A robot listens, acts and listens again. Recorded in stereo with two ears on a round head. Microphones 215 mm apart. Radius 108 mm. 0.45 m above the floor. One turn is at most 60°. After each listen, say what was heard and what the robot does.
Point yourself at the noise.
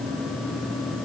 Keep listening.
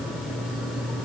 Keep listening.
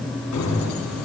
Turn 60° left.
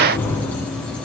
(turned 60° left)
So it is at 10° left. Turn 10° left.
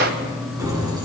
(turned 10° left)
The keys jangling is now 15° right. Turn 15° right.
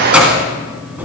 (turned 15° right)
Facing the keys jangling.